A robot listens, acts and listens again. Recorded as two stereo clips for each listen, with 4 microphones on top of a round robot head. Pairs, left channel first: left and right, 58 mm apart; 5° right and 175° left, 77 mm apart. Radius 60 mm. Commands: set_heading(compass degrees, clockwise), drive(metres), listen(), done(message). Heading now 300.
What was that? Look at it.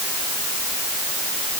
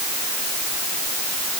listen()
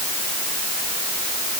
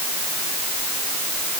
listen()
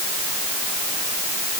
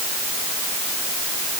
done("I can't make out anything to turn to.")